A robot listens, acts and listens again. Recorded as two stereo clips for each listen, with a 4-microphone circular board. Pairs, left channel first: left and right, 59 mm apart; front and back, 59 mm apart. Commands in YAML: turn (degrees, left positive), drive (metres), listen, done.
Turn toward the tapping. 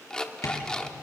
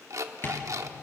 turn: 55
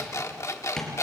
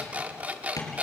turn: 10
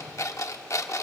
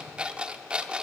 listen: true
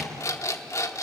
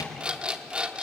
done: "Facing the tapping, over 4 m away."